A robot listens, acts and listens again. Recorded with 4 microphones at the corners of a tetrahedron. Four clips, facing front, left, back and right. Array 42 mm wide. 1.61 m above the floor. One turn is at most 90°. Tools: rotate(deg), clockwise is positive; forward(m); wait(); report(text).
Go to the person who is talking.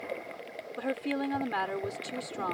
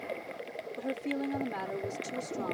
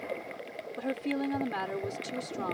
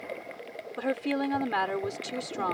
rotate(75)
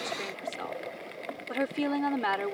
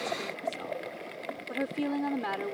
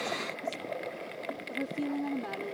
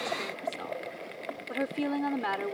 rotate(15)
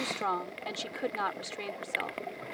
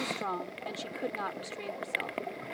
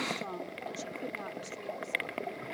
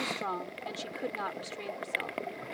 forward(1.0)
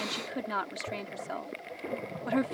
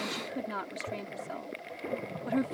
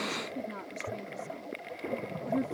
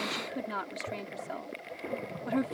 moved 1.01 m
forward(1.0)
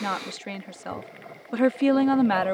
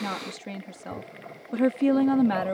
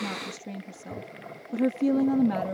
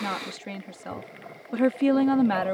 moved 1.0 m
rotate(10)
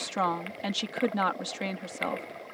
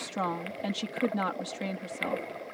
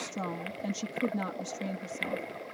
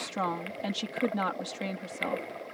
forward(1.0)
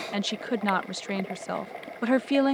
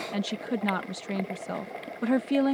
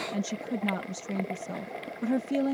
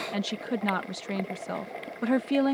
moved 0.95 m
forward(1.0)
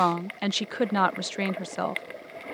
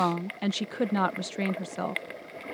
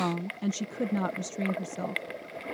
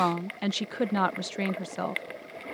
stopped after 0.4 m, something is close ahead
report("Arrived at the woman speaking, straight ahead.")